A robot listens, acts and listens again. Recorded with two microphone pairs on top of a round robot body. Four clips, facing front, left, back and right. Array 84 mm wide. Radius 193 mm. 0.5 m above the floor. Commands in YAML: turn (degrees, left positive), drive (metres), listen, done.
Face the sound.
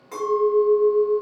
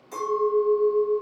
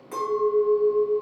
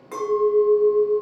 turn: -85
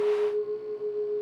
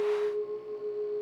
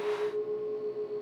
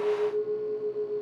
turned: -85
done: "Found it: a clink, straight ahead, 2 to 4 m away."